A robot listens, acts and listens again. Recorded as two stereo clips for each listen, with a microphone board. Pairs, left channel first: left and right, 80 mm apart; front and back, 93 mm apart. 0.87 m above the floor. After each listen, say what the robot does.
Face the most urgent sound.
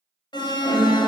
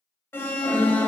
Turn 65° left.
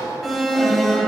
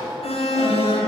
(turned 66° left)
Facing the alarm.